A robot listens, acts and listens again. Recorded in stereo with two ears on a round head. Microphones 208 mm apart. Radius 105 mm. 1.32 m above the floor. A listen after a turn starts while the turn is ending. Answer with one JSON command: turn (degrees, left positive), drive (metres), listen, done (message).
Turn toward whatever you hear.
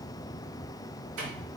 {"turn": -75}
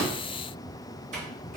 {"turn": -30}
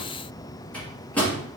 {"done": "Found it: a microwave, straight ahead, 2 to 4 m away."}